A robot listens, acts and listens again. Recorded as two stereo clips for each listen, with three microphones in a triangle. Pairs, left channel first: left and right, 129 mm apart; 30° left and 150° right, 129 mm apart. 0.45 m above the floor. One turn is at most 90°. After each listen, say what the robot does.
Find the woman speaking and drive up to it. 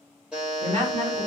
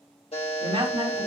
Turn 90° right.
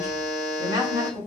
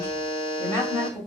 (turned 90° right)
Turn 35° right.
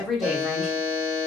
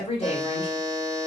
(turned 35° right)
Drive 1.0 m forward.
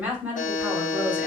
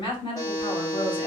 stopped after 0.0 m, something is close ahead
Turn 15° right.
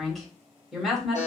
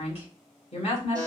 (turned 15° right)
Something is in my way. I am facing the woman speaking but have not reached it.